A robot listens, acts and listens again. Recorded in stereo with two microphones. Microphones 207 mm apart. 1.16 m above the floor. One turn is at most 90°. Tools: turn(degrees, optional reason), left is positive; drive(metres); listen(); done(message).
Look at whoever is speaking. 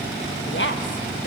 turn(degrees=65, reason="The woman speaking: about 65° left or 115° left.")
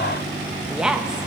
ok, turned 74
done("Found it: a woman speaking, straight ahead.")